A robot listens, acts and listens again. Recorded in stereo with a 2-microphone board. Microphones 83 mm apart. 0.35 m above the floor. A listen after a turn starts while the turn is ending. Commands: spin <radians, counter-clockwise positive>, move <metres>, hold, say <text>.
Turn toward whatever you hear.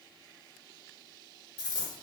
spin 1.13
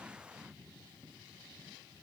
hold
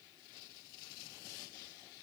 say I heard a dropped coin, but can't make it out now. It was about straight ahead or 50° left.